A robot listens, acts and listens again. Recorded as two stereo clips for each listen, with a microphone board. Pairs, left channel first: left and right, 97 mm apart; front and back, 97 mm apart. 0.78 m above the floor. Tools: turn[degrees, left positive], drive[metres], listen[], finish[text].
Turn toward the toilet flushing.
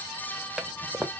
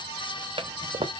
Thought: The toilet flushing: 175° right.
Action: turn[-175]
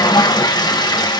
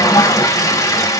Thought: The toilet flushing is now 50° left.
Action: turn[50]
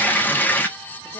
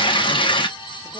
Thought: The toilet flushing is now 20° left.
Action: turn[20]
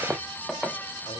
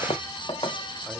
Action: finish[Found it: a toilet flushing, straight ahead.]